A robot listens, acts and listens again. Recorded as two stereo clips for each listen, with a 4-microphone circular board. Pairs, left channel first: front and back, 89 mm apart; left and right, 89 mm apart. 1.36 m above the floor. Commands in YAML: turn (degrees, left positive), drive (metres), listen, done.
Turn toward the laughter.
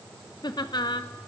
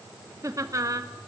turn: -40
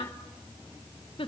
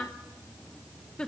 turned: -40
turn: 10
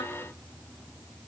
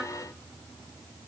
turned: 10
listen: true
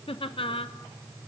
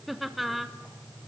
done: "Found it: laughter, straight ahead, under 1 m away."